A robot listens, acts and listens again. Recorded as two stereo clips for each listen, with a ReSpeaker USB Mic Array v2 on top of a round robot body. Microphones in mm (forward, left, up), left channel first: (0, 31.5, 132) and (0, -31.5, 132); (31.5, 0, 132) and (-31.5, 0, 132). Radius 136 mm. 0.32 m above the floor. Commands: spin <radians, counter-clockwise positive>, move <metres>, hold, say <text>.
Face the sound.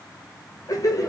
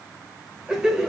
spin 1.75
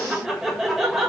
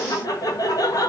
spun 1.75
say Found it: laughter, straight ahead, 1 to 2 m away.